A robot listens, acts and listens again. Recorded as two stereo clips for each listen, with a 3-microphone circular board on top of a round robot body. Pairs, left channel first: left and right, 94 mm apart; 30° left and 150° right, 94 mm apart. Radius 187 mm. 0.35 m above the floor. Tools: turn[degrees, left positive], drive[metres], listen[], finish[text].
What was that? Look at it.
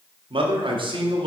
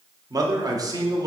Thought: The man speaking: 105° right.
Action: turn[-105]
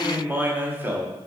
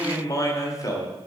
Thought: The man speaking is now 20° right.
Action: turn[-20]
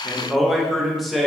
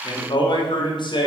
Action: finish[Facing the man speaking, 1 to 2 m away.]